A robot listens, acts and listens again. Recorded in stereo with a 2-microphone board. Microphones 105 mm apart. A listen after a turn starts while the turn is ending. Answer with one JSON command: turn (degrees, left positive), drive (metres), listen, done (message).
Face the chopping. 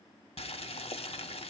{"listen": true}
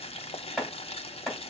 {"turn": 30}
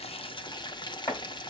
{"turn": 145}
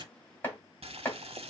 {"turn": 20}
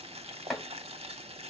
{"done": "Facing the chopping, 2 to 4 m away."}